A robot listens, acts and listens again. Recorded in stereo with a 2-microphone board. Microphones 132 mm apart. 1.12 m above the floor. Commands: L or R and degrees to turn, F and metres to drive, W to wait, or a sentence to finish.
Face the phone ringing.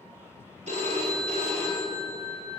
R60
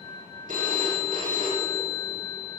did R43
R80
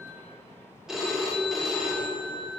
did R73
Facing the phone ringing, 2 to 4 m away.